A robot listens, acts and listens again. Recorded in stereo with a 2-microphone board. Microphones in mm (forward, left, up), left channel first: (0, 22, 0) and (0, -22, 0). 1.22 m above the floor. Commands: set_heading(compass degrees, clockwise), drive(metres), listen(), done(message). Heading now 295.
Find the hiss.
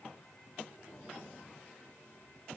listen()
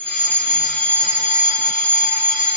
listen()
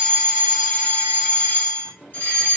done("I can't make out a hiss to turn to.")